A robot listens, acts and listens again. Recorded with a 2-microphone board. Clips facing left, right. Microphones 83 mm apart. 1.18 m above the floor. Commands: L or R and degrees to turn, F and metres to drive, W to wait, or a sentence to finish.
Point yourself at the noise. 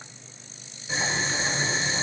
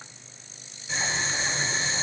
L30
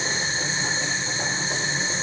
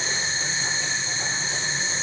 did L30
L140
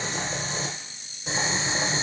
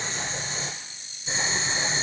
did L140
L65
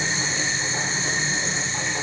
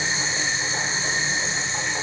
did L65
R15
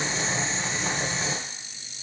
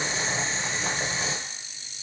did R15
Facing the boiling.